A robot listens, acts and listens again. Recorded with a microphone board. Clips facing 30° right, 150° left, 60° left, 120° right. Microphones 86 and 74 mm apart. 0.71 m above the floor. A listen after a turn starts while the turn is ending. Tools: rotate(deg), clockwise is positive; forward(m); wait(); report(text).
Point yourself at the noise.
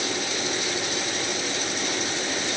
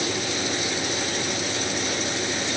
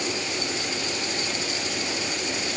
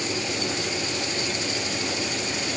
wait()
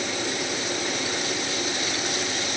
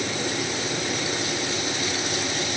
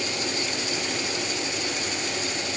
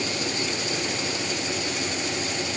wait()
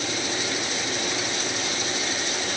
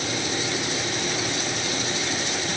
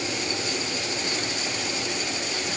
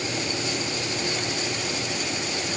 report("I can't make out anything to turn to.")